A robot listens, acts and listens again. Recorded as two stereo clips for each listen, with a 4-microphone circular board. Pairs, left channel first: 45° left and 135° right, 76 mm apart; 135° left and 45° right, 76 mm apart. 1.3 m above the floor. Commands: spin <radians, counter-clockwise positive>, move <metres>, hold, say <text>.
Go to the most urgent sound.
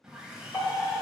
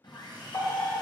spin 1.66
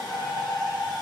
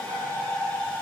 spin 0.17
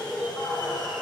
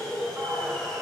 move 1.0
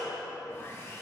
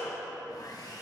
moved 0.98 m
spin 0.17
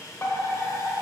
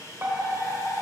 move 1.0
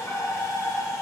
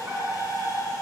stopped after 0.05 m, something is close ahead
say Arrived at the fire alarm, straight ahead.